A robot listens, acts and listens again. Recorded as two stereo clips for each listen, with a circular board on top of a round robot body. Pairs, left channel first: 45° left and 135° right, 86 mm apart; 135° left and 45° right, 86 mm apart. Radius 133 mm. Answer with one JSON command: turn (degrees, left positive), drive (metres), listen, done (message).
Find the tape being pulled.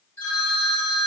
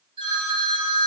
{"listen": true}
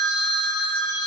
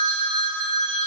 {"listen": true}
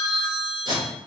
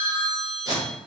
{"turn": -95}
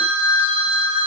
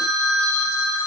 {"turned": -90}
{"listen": true}
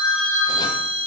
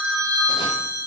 {"listen": true}
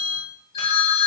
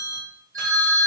{"done": "I heard tape being pulled from this way, but can't make it out now."}